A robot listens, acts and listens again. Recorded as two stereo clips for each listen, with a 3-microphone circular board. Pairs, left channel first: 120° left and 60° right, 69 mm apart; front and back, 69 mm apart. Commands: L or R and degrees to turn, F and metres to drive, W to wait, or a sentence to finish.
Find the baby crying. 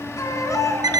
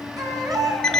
L160
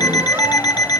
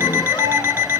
W
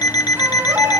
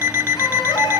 Facing the baby crying.